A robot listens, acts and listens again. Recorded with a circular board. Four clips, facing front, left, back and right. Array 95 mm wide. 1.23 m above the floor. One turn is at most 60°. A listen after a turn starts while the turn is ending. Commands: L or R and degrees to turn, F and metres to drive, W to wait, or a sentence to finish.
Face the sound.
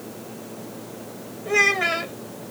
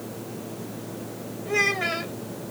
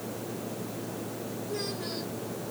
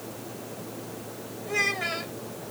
L10
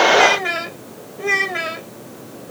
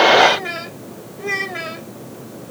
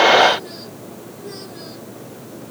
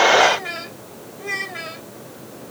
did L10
L15
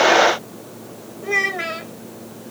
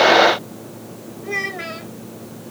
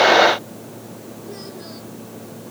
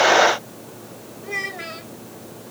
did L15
L10
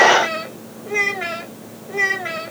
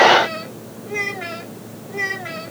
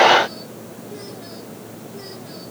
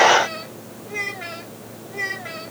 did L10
L10
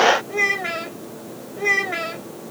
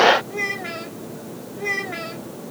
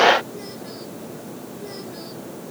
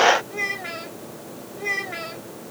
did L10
Found it: a child speaking, straight ahead.